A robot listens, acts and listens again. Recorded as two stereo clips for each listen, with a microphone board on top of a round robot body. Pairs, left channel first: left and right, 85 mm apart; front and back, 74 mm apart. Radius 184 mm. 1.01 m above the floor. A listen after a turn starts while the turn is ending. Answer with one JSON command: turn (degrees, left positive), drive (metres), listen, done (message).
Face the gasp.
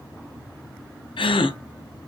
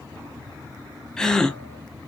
{"turn": 80}
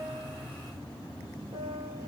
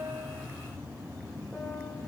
{"done": "I heard a gasp from this way, but can't make it out now."}